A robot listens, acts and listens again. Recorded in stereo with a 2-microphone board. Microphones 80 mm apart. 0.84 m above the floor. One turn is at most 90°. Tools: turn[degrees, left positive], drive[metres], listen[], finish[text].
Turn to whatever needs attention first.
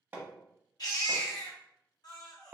Thought: The baby crying: about 60° left or 120° left.
Action: turn[60]
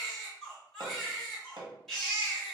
Action: finish[Found it: a baby crying, straight ahead.]